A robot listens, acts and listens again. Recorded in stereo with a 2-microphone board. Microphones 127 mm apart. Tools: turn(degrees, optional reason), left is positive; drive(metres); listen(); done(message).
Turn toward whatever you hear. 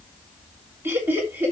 turn(degrees=-15, reason="The laughter: about 15° right or 165° right.")
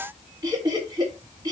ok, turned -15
turn(degrees=-35, reason="The laughter: about 35° right or 145° right.")
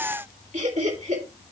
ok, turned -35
turn(degrees=-110, reason="So it is at 110° right.")
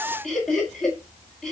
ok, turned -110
done("Found it: laughter, straight ahead, over 4 m away.")